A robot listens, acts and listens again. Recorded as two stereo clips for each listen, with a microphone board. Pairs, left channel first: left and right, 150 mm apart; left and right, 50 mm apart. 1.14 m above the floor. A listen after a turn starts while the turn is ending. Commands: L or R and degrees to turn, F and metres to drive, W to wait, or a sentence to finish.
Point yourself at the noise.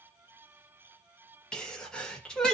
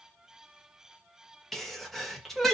L30
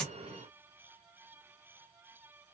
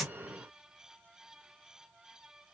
W
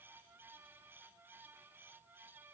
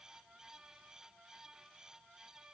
I heard a sneeze, but can't make it out now. It was about 25° right or 145° left.